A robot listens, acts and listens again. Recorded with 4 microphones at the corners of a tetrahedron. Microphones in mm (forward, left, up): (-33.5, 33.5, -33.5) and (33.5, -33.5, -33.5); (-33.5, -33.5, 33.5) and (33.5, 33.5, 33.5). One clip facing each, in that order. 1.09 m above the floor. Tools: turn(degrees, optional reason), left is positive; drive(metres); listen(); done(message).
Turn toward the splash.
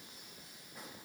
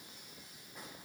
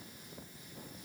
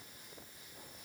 listen()
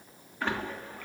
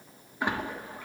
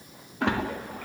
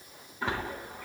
turn(degrees=-120, reason="The splash: 120° right.")
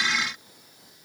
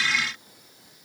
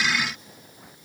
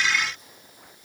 done("I heard a splash from this way, but can't make it out now.")